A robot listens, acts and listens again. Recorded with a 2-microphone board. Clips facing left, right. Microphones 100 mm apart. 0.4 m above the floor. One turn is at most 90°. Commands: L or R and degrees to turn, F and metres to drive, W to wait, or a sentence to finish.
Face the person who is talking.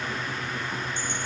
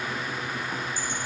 W
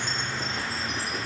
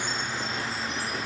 W
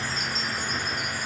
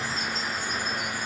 I can't make out anyone speaking to turn to.